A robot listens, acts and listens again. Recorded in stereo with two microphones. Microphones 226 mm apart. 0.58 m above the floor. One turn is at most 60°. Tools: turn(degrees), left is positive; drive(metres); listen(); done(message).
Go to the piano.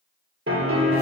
turn(degrees=-60)
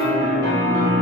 turn(degrees=-55)
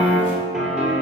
drive(metres=1.0)
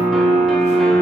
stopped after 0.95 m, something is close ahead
done("Arrived at the piano, straight ahead.")